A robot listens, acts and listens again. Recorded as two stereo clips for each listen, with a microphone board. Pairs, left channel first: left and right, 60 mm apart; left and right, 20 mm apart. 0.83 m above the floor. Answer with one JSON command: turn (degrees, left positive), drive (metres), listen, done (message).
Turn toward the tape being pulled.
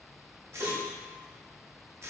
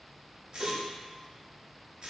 {"turn": -50}
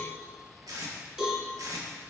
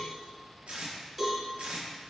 {"turn": -80}
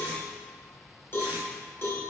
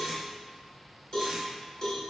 {"listen": true}
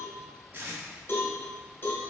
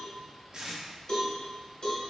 {"turn": -35}
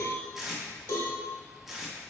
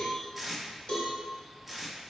{"done": "Facing the tape being pulled."}